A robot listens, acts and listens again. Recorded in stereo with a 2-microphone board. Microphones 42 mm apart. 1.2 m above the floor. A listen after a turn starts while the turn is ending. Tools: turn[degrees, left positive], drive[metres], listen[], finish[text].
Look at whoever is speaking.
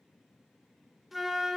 Action: listen[]
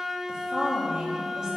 Thought: The woman speaking: about 15° right or 165° right.
Action: turn[-15]
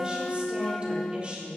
Thought: The woman speaking: about 25° right or 155° right.
Action: turn[-25]
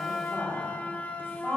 Thought: So it is at 130° right.
Action: turn[-130]
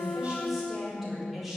Action: finish[Facing the woman speaking.]